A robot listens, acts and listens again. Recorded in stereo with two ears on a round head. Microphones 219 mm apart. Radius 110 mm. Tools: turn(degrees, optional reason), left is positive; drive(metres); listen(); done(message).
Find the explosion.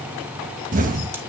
turn(degrees=-35, reason="The explosion: about 35° right or 145° right.")
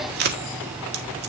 listen()
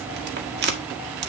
done("I heard an explosion, but can't make it out now. It was about straight ahead or 110° right.")